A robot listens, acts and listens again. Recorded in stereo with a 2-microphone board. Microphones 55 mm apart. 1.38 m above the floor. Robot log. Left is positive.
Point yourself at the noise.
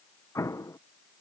note: The explosion: about 65° left or 115° left.
cmd yaw +65
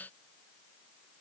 cmd idle
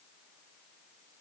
end: I heard an explosion, but can't make it out now. It was about straight ahead or 50° left.